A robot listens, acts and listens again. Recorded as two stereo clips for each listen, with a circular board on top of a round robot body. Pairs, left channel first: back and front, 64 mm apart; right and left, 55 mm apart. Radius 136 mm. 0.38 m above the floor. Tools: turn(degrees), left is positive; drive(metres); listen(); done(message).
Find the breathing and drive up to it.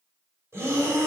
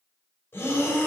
turn(degrees=-45)
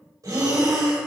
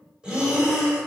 turn(degrees=20)
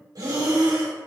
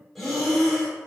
drive(metres=1.0)
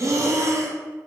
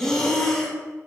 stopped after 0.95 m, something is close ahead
done("Arrived at the breathing, straight ahead.")